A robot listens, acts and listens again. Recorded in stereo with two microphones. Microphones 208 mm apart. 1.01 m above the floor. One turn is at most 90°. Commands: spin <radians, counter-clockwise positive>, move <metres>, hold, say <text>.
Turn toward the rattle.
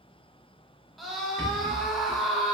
spin 1.05
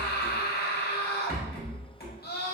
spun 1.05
spin 0.96
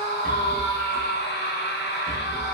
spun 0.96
say Facing the rattle.